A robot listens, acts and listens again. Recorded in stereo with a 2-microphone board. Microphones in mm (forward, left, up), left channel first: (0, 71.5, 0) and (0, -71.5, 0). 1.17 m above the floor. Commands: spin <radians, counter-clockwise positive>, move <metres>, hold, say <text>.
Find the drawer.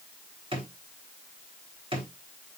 spin -0.70
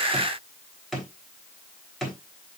say Facing the drawer.